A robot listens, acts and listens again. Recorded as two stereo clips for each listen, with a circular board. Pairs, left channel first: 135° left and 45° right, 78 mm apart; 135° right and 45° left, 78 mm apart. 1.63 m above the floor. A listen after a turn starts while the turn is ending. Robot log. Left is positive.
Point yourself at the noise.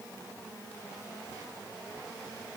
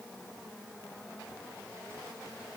cmd idle
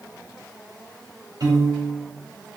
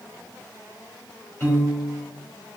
note: The piano: 75° right.
cmd yaw -75
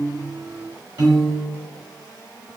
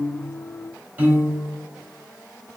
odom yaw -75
note: The piano is now 20° right.
cmd yaw -20
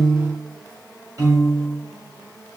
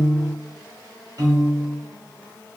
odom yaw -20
end: Facing the piano, 1 to 2 m away.